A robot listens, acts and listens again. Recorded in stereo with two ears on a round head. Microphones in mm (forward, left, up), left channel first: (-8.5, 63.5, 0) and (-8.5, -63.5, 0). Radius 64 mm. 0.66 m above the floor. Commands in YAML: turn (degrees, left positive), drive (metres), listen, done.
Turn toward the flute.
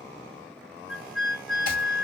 turn: 30
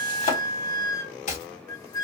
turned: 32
turn: 145
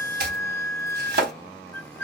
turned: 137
turn: 10
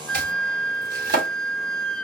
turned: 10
done: "Facing the flute."